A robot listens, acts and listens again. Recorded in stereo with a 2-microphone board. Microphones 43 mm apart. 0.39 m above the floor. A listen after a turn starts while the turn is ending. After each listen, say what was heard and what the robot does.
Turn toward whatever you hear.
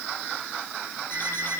The alarm clock: about 60° left or 120° left. Turn 60° left.
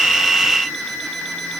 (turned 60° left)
Facing the alarm clock.